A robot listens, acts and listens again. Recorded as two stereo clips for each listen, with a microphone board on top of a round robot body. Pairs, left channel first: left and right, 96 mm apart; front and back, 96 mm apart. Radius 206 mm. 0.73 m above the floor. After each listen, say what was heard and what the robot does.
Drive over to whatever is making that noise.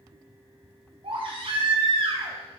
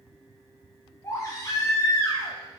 The baby crying: 60° right. Turn 60° right.
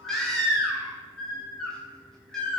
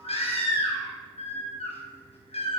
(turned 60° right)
Drive 1.0 m forward.
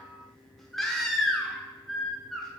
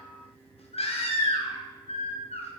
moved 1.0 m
Drive 1.0 m forward.
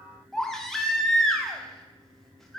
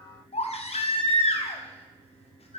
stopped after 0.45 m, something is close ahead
I am next to the baby crying.